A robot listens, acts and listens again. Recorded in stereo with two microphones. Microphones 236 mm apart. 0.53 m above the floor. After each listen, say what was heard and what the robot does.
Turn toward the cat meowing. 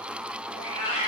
The cat meowing: about 25° left or 155° left. Turn 25° left.
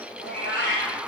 So it is at 130° left. Turn 130° left.
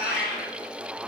The cat meowing is now 45° left. Turn 45° left.
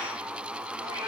The cat meowing is now 15° right. Turn 15° right.
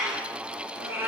The cat meowing is now 10° right. Turn 10° right.
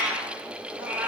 Found it: a cat meowing, straight ahead.